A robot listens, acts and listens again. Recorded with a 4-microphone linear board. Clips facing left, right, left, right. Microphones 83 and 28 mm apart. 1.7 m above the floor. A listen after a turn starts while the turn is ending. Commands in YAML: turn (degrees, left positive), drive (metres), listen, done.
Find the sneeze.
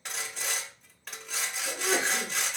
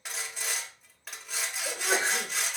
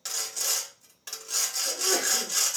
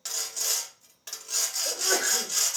turn: -75
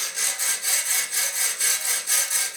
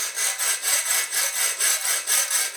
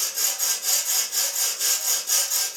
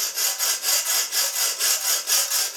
listen: true
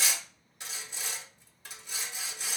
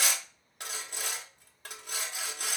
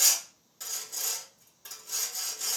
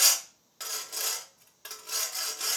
done: "I heard a sneeze, but can't make it out now. It was about straight ahead or 30° right."